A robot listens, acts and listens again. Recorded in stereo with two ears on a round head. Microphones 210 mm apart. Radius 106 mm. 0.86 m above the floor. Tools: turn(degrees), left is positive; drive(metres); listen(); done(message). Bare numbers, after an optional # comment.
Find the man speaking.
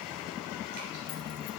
listen()
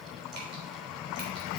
listen()
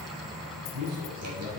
# The man speaking: about 70° right or 110° right.
turn(-70)
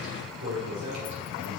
# So it is at 50° right.
turn(-50)
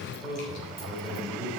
done("Found it: a man speaking, straight ahead.")